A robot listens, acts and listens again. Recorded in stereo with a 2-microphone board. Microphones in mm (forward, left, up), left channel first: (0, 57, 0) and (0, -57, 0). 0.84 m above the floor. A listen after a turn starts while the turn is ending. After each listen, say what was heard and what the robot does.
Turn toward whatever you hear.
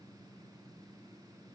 Keep listening.
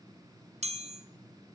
The chime: about 70° right or 110° right. Turn 70° right.
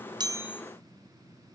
Keep listening.
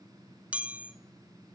So it is at 10° right. Turn 10° right.
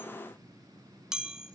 Found it: a chime, straight ahead.